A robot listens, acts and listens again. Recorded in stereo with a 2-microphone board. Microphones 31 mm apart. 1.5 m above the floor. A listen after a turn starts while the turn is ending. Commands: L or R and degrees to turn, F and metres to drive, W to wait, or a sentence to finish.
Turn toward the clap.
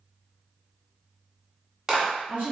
R25
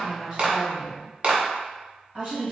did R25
R130
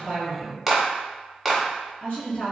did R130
Facing the clap.